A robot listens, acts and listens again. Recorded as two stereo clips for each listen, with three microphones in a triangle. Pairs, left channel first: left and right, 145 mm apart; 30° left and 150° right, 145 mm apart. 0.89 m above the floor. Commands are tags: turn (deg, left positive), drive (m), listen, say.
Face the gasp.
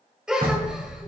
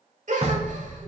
<turn deg="-175"/>
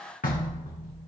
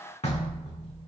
<say>I heard a gasp from this way, but can't make it out now.</say>